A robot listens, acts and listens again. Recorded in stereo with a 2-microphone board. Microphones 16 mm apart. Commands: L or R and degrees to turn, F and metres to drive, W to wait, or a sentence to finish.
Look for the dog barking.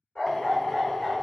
L65
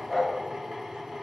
L25
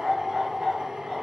R35
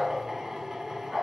R30
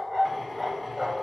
Facing the dog barking.